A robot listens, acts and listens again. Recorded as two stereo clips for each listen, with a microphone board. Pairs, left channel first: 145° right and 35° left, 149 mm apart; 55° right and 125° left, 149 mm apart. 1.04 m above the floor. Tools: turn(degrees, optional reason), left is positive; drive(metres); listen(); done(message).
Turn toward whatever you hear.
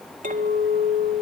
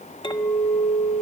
done("Facing the clink, 1 to 2 m away.")